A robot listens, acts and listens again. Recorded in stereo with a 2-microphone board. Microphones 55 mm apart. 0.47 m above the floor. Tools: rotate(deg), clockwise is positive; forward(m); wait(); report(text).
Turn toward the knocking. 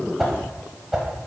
wait()
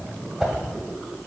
wait()
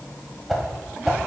report("I can't make out knocking, only a whoosh.")